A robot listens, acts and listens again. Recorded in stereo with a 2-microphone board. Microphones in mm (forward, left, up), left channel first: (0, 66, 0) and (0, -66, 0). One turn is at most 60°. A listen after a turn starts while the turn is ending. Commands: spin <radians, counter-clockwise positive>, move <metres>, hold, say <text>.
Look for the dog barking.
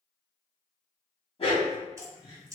spin 0.87
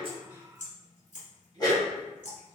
spin 0.61
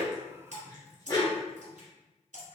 spin 0.52
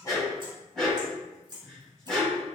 say Found it: a dog barking, straight ahead, 1 to 2 m away.